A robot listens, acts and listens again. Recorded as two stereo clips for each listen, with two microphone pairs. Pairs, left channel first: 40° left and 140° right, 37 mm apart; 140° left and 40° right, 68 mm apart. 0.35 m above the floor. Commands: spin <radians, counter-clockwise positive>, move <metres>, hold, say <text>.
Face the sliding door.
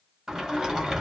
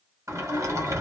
spin -1.13
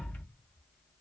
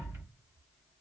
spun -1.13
say Found it: a sliding door, straight ahead, 1 to 2 m away.